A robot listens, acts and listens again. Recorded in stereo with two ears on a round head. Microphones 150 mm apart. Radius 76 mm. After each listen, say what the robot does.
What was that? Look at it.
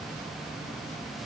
Keep listening.
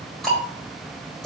Turn 30° left.
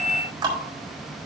Turn 25° right.
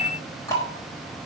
Turn 20° left.
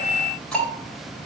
Found it: ticking, straight ahead.